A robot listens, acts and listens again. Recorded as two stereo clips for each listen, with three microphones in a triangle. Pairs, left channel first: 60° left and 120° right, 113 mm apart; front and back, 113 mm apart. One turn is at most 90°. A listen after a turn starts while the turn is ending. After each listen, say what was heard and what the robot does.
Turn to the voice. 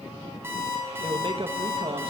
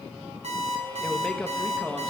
The man speaking: 80° right. Turn 80° right.
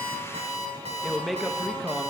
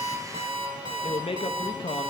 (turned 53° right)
The man speaking is now 30° right. Turn 30° right.
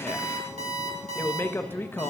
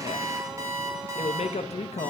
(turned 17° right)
The man speaking is now 10° right. Turn 10° right.
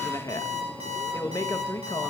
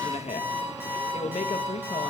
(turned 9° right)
Facing the man speaking.